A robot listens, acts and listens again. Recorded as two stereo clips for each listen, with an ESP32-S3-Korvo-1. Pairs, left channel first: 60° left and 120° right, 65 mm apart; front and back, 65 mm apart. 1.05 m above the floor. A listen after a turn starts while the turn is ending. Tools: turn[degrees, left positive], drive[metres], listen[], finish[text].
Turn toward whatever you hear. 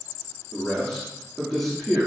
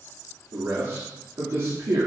Thought: The man speaking: 155° left.
Action: turn[155]
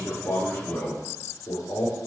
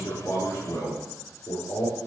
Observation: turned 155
Thought: The man speaking is now 15° left.
Action: turn[15]
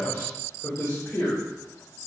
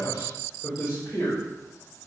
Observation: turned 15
Thought: The man speaking is now 10° left.
Action: turn[10]
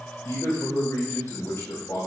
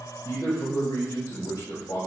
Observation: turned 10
Action: finish[Facing the man speaking.]